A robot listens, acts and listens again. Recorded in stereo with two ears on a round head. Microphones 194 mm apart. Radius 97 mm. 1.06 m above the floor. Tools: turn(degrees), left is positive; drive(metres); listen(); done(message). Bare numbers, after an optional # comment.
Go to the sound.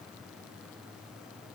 listen()
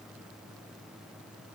listen()
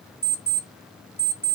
turn(30)
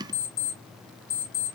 # So it is at 140° left.
turn(140)
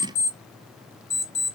# The alarm clock is now 25° left.
turn(25)
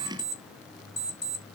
drive(1.0)
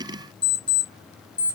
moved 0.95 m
drive(1.0)
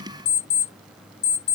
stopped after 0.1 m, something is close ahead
# The alarm clock is now 15° left.
turn(15)
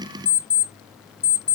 done("I am next to the alarm clock.")